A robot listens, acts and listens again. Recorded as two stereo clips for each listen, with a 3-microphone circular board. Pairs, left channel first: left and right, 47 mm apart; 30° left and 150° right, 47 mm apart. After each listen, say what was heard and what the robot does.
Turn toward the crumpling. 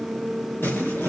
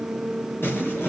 The crumpling: 60° left. Turn 60° left.
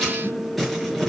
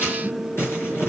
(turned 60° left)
Found it: crumpling, straight ahead.